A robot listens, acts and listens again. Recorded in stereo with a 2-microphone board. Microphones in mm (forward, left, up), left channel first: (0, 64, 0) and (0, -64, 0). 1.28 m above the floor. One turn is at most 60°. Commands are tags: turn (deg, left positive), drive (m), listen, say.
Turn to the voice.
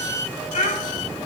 <turn deg="60"/>
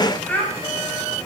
<turn deg="15"/>
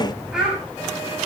<say>Facing the child speaking, over 4 m away.</say>